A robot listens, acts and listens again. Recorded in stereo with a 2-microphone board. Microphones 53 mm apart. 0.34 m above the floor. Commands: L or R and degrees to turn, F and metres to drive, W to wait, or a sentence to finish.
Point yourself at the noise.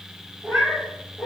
L30
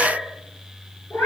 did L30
L130
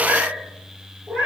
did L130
R40
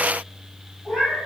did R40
L15
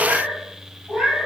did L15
Found it: a cat meowing, straight ahead.